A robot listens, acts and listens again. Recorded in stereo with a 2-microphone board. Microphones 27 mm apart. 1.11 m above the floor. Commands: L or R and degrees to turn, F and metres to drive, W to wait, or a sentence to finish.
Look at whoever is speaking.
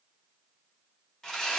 W
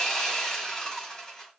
W
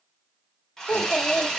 L70
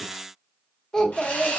L25
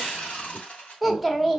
Found it: a child speaking, straight ahead, 1 to 2 m away.